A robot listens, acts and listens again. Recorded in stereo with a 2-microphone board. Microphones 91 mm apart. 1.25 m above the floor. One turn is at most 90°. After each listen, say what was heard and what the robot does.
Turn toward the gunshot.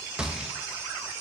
Turn 30° right.
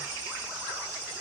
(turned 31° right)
Keep listening.
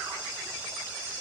I heard a gunshot, but can't make it out now. It was about 20° left or 140° right.